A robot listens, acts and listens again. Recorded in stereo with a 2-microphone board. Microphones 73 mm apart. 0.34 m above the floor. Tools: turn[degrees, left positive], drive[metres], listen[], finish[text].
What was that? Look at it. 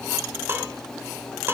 Thought: The dishes clattering: about 30° right or 150° right.
Action: turn[-30]
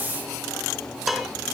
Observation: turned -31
Action: finish[Facing the dishes clattering, 2 to 4 m away.]